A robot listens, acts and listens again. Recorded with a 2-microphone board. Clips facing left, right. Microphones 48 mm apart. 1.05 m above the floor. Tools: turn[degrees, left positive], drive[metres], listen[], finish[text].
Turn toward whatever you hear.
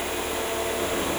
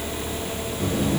Thought: The buzzer: about 30° left or 150° left.
Action: turn[30]
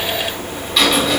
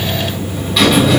Action: finish[Found it: a buzzer, straight ahead, 1 to 2 m away.]